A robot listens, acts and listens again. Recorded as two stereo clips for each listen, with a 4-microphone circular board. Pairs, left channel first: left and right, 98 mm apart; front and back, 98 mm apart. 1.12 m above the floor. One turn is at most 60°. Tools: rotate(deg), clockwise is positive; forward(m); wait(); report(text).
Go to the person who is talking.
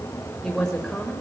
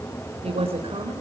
rotate(-60)
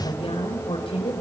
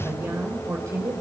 rotate(-60)
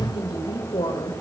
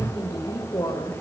rotate(-55)
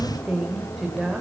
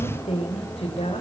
forward(1.0)
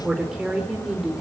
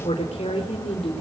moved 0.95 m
forward(1.0)
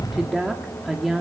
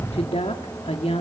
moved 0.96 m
forward(1.0)
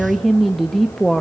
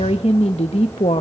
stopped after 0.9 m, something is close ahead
report("I am next to the woman speaking.")